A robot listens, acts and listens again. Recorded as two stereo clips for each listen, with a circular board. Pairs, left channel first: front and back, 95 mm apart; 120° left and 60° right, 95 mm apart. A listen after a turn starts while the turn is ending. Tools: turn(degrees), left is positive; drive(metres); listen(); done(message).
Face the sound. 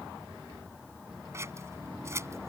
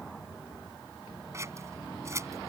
turn(degrees=-120)
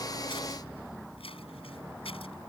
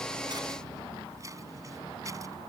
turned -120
done("Found it: scissors, straight ahead.")